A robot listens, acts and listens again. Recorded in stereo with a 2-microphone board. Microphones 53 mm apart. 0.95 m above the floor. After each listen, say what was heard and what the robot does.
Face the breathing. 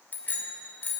Keep listening.
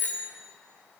Keep listening.
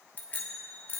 I can't make out breathing to turn to.